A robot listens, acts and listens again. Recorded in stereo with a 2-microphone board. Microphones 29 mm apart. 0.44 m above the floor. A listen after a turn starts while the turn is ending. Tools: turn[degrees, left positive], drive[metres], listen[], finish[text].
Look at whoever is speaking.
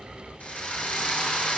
Action: listen[]
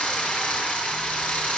Action: listen[]
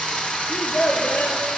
Action: turn[90]
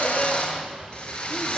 Action: listen[]
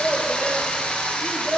Action: finish[Facing the child speaking, over 4 m away.]